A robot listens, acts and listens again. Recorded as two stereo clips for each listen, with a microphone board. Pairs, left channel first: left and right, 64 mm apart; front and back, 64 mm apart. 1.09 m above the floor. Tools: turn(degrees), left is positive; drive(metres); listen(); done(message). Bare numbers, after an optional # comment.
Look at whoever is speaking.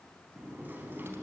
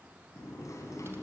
listen()
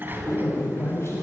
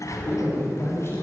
# The man speaking: 45° left.
turn(45)
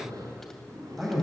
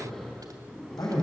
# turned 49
done("Facing the man speaking, over 4 m away.")